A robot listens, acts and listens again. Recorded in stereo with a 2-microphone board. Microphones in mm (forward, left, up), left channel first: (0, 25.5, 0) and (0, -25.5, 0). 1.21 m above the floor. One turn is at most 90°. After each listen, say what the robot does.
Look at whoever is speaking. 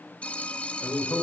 Turn 70° left.
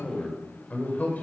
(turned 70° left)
Turn 30° left.
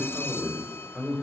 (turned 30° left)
Found it: a man speaking, straight ahead, over 4 m away.